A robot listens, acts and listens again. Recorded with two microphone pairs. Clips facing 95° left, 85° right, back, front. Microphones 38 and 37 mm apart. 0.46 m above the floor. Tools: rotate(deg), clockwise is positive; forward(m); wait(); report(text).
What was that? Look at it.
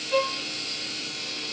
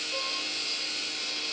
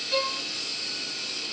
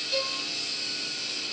rotate(-115)
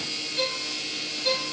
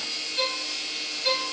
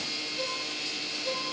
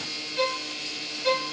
report("Found it: a violin, straight ahead, 1 to 2 m away.")